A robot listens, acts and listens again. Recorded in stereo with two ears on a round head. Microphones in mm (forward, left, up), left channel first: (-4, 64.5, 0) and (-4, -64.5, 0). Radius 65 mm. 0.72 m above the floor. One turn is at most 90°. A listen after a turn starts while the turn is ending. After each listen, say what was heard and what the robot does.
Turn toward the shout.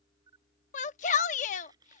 The shout: about 55° left or 125° left. Turn 55° left.
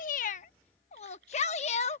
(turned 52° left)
So it is at 60° left. Turn 60° left.
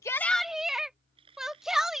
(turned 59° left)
Facing the shout.